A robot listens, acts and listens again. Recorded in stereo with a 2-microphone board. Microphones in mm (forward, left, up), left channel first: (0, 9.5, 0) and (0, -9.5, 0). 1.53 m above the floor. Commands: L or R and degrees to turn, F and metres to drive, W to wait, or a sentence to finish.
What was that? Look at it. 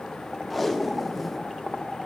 L30
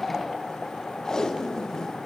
L150
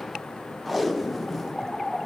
Facing the tape being pulled, under 1 m away.